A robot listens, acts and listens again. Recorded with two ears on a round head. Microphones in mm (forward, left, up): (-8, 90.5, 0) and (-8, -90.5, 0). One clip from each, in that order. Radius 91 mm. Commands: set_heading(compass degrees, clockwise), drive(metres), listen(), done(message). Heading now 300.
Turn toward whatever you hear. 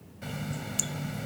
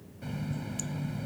set_heading(255)
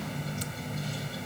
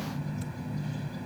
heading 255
set_heading(170)
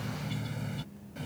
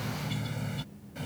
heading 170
set_heading(180)
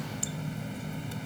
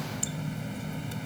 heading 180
done("Facing the running tap.")